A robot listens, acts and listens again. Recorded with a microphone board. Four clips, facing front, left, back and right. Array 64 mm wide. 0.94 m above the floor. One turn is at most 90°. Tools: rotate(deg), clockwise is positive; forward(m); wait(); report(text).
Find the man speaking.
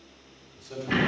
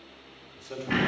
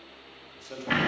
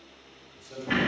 rotate(-90)
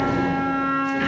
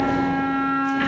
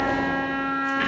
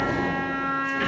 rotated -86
rotate(-35)
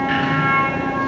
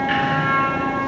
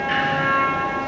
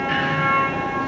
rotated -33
wait()
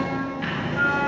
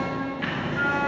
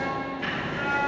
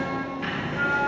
report("I heard a man speaking from this way, but can't make it out now.")